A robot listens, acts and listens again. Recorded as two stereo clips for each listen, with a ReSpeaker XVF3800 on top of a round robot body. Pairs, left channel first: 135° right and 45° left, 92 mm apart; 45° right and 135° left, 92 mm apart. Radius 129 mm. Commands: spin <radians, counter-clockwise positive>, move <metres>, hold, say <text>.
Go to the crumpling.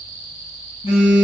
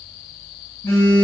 hold
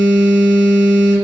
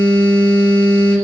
hold
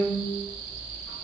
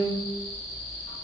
say I can't make out crumpling to turn to.